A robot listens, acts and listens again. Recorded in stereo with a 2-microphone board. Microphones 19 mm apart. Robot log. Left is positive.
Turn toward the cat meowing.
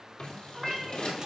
cmd yaw +30
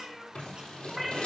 cmd yaw +30
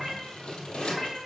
cmd yaw -30
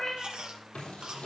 note: So it is at 30° left.
cmd yaw +30
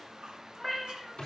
end: Facing the cat meowing, 2 to 4 m away.